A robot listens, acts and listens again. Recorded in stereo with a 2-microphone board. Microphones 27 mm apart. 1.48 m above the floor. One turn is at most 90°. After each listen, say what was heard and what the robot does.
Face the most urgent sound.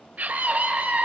The scream: about 70° right or 110° right. Turn 70° right.
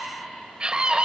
So it is at 40° right. Turn 40° right.
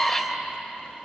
The scream is now 10° left. Turn 10° left.
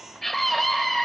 Found it: a scream, straight ahead, 2 to 4 m away.